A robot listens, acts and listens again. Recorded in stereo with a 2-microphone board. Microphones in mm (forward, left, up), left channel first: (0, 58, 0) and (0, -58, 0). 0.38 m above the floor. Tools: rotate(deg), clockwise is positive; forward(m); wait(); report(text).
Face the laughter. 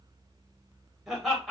rotate(-30)
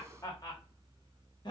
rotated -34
rotate(-135)
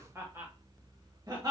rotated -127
rotate(40)
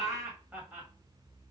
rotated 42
rotate(15)
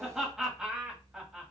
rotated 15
report("Facing the laughter, 1 to 2 m away.")